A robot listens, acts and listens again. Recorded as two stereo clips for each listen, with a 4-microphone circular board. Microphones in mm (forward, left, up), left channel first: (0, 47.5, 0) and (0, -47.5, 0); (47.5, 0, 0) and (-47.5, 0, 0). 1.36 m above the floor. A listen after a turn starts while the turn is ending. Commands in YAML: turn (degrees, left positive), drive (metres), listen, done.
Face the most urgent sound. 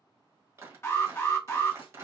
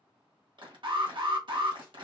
turn: 155
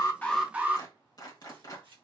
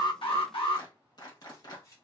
turn: -15
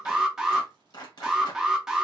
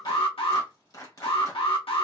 done: "Facing the alarm."